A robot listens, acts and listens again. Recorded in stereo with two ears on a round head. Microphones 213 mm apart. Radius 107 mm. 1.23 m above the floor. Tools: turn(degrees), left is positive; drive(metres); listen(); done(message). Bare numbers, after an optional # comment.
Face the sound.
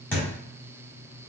turn(30)
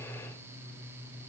listen()
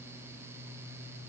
done("I heard a thud, but can't make it out now. It was about 20° right or 140° left.")